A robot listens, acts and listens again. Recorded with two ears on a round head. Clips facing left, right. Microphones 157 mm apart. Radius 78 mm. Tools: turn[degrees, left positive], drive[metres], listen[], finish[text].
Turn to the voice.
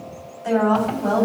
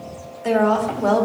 Thought: The woman speaking: about 70° right or 110° right.
Action: turn[-70]
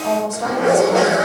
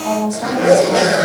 Action: finish[Facing the woman speaking.]